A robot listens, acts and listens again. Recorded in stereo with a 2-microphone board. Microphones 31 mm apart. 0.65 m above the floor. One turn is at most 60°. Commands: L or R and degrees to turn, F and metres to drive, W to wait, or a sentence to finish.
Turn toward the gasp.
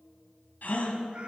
L60
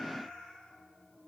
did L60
W
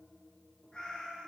I heard a gasp, but can't make it out now. It was about straight ahead or 60° left.